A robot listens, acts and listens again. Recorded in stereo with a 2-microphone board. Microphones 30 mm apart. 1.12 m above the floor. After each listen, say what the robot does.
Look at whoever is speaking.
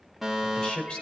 Turn 40° left.
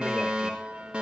Keep listening.
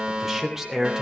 Turn 15° right.
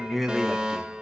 Turn 10° right.
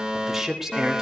Turn 15° right.
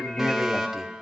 Turn 10° right.
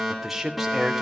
Facing the man speaking, 2 to 4 m away.